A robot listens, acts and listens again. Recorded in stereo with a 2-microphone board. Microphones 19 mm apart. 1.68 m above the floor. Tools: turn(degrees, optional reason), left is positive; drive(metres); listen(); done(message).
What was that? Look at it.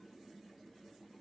listen()
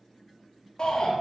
turn(degrees=45, reason="The shout: about 45° left or 135° left.")
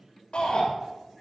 turn(degrees=90, reason="So it is at 90° left.")
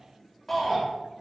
turn(degrees=20, reason="The shout is now 20° left.")
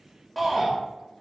done("Facing the shout, 2 to 4 m away.")